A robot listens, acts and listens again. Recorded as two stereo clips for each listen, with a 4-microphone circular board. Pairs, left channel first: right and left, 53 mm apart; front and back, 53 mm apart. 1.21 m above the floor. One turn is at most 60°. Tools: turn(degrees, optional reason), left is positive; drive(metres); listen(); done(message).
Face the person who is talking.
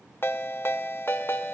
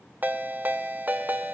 listen()
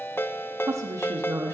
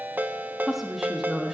turn(degrees=60, reason="The woman speaking: 95° left.")
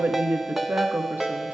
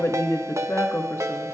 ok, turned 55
turn(degrees=35, reason="The woman speaking is now 35° left.")
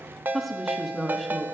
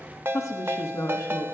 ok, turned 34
done("Found it: a woman speaking, straight ahead, 1 to 2 m away.")